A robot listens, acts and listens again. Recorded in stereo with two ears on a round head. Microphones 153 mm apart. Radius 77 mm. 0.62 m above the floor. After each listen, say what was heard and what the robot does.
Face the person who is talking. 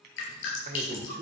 The man speaking: about 50° right or 130° right. Turn 50° right.
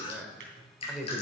Facing the man speaking, 2 to 4 m away.